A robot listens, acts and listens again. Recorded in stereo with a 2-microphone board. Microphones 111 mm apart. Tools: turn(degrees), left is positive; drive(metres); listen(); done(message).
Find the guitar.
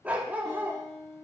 turn(degrees=30)
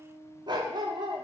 turn(degrees=135)
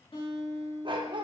turn(degrees=55)
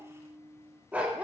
turn(degrees=15)
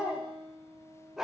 done("Found it: a guitar, straight ahead, 2 to 4 m away.")